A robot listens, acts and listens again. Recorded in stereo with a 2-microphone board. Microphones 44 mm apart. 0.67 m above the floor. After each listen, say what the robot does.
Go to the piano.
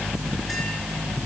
Keep listening.
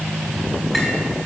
Keep listening.
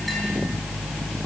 I can't make out a piano.